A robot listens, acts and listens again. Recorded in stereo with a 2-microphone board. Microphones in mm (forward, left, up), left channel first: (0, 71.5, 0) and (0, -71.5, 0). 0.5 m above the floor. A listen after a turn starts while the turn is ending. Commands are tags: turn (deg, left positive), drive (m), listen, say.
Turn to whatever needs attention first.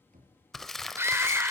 <turn deg="-20"/>
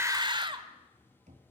<turn deg="-140"/>
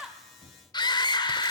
<turn deg="40"/>
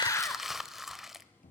<listen/>
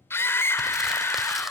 <turn deg="20"/>
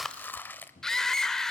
<say>Facing the scream, 1 to 2 m away.</say>